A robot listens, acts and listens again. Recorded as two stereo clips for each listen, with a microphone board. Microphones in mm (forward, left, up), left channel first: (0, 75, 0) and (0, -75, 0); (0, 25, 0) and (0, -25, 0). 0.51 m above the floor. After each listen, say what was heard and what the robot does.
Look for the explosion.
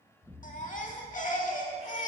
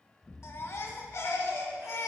Turn 30° left.
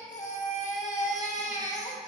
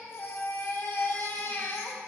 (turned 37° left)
Keep listening.
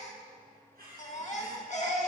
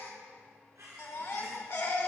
I heard an explosion, but can't make it out now. It was about 25° right or 130° left.